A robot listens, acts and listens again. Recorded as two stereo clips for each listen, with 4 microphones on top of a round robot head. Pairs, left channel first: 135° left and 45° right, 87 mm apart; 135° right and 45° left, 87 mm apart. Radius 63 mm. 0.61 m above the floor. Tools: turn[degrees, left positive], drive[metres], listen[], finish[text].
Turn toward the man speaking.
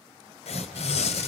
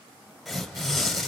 Action: listen[]
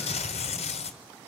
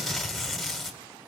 Action: listen[]
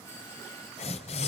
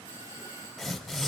Action: finish[I can't make out a man speaking, only tearing paper and a doorbell.]